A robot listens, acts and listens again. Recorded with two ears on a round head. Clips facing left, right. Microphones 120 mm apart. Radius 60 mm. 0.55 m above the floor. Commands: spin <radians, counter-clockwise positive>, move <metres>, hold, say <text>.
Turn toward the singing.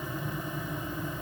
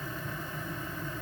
hold
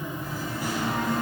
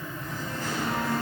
spin 0.35
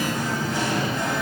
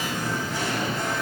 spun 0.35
spin 1.92
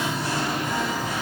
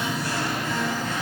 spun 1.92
spin 0.17
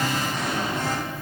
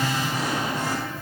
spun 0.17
spin -0.17
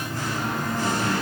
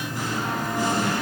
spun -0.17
spin -0.26
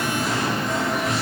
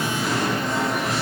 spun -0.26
say Found it: singing, straight ahead.